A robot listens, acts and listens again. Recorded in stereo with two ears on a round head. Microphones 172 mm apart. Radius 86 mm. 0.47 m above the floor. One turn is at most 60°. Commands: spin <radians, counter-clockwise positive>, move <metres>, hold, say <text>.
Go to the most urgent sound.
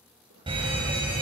spin -0.52
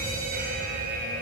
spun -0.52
spin -1.05
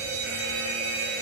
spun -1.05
spin -1.05
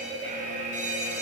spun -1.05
spin -0.79
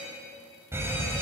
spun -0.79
spin -0.26
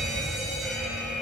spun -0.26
move 1.0
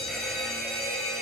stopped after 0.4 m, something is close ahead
say Blocked. The fire alarm is further on, straight ahead.